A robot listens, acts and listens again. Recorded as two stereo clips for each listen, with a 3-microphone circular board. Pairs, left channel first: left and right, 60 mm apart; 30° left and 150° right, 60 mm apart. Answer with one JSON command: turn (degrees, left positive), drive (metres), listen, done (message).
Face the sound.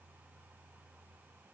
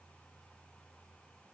{"listen": true}
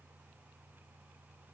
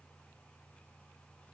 {"listen": true}
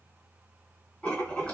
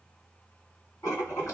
{"turn": 15}
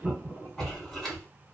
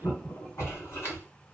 {"done": "Found it: writing, straight ahead, 1 to 2 m away."}